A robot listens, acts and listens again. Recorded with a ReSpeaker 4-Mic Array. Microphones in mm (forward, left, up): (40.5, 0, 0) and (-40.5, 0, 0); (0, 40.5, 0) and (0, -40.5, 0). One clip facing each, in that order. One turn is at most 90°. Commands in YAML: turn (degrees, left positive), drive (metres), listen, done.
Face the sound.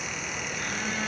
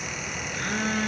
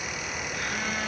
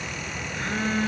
turn: -90
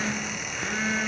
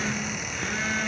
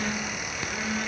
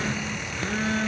turn: -80
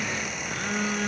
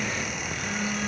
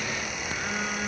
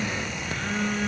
done: "Found it: a phone buzzing, straight ahead, 1 to 2 m away."